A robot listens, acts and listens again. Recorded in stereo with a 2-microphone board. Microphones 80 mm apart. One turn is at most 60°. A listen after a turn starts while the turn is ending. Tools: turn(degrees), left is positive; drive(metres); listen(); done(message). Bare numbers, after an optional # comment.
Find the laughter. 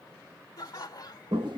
# The laughter: about 45° left or 135° left.
turn(45)
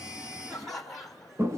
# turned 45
done("Facing the laughter.")